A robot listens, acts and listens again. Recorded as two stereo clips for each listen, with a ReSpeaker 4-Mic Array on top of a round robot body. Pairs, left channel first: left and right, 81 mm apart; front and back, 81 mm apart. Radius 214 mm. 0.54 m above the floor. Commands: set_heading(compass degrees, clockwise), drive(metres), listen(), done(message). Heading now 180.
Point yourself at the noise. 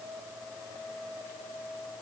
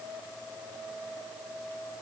listen()
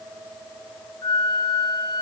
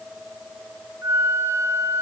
set_heading(60)
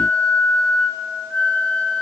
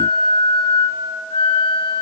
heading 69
set_heading(54)
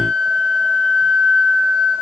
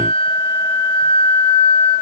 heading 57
done("Facing the flute, under 1 m away.")